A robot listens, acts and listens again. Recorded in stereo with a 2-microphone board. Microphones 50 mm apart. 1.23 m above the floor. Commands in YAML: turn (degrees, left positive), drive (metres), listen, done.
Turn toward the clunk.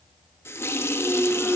turn: -30
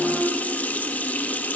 turn: -120
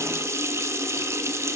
done: "Facing where the clunk came from. I can't hear it now."